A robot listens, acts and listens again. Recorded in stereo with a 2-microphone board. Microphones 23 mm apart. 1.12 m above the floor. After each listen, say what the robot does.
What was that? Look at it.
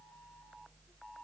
Keep listening.
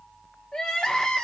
Turn 35° left.
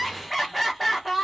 Found it: crying, straight ahead, under 1 m away.